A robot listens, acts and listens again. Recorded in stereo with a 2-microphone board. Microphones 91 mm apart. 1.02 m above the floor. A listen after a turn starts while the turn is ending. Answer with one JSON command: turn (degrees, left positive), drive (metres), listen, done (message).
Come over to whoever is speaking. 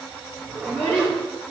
{"turn": 30}
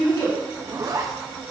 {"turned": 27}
{"listen": true}
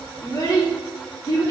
{"turn": 140}
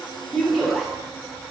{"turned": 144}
{"drive": 1.0}
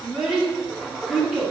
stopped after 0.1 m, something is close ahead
{"done": "Blocked. The child speaking is further on, straight ahead."}